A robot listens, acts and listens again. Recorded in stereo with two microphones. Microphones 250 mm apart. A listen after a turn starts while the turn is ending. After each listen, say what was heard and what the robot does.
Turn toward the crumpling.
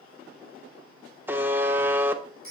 Keep listening.
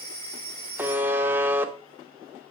Keep listening.
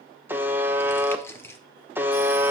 Turn 30° left.
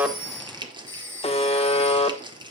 So it is at 20° right. Turn 20° right.
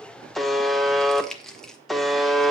Facing the crumpling.